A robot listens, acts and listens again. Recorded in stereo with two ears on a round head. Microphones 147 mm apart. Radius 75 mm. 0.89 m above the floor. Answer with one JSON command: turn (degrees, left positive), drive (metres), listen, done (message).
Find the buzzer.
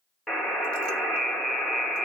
{"turn": 30}
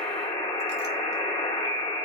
{"turn": 150}
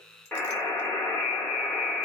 {"turn": 10}
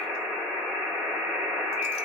{"done": "Found it: a buzzer, straight ahead."}